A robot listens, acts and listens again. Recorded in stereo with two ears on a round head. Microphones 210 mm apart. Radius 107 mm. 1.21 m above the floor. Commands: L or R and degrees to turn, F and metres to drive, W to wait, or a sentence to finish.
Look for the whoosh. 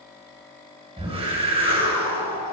R25
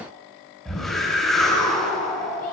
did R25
Facing the whoosh.